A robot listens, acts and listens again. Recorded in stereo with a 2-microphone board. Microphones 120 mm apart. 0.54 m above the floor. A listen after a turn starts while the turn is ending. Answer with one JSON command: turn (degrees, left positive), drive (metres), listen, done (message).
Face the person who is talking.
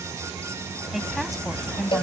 {"turn": -30}
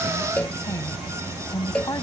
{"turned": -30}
{"turn": 30}
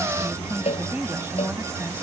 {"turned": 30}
{"turn": -15}
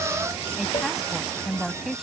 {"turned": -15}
{"done": "Facing the woman speaking."}